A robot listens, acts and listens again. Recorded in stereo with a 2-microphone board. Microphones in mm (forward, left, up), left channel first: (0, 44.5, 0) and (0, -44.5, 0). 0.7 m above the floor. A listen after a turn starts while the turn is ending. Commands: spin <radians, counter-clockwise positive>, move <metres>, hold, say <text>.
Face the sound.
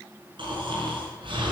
spin -1.13
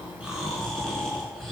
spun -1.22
say Found it: snoring, straight ahead, over 4 m away.